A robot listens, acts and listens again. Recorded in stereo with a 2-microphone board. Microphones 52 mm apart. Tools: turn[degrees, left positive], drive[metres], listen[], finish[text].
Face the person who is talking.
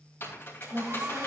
Thought: The woman speaking: about 25° right or 155° right.
Action: turn[-25]
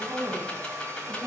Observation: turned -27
Thought: So it is at 130° right.
Action: turn[-130]
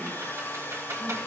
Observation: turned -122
Action: listen[]
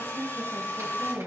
Thought: The woman speaking is now 10° right.
Action: turn[-10]
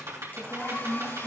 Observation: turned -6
Action: finish[Found it: a woman speaking, straight ahead.]